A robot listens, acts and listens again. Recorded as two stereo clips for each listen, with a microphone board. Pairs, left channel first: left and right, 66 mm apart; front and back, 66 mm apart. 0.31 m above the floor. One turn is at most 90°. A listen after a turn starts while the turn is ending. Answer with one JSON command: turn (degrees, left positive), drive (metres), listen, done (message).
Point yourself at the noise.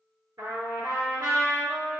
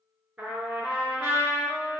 {"turn": -90}
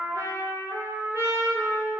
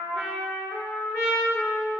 {"turn": -40}
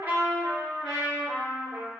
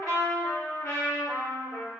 {"turn": -10}
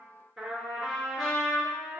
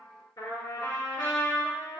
{"done": "Found it: a trumpet, straight ahead."}